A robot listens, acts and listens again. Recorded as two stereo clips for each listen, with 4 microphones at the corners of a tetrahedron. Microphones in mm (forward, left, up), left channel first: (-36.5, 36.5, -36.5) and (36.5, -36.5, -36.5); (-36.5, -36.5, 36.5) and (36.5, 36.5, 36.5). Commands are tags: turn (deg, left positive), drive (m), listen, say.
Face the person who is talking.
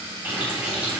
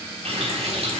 <listen/>
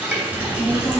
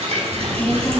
<turn deg="-105"/>
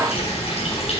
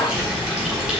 <turn deg="-15"/>
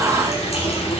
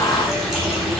<turn deg="-15"/>
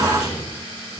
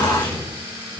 <say>Facing the child speaking, over 4 m away.</say>